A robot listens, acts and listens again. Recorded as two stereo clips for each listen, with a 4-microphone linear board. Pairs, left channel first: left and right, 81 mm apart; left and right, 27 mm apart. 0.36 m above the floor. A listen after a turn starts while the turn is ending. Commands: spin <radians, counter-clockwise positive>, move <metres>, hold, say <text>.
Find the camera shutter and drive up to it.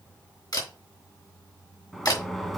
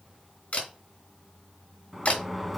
spin 0.96
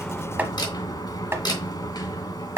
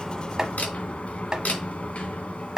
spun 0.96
spin 1.13
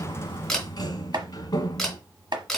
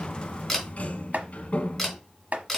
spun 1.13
move 1.0
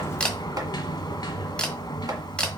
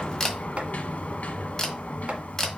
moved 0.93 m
spin 0.26
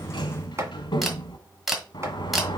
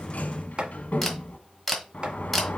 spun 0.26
move 1.0
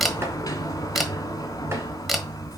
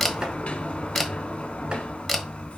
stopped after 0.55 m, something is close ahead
say Arrived at the camera shutter, straight ahead.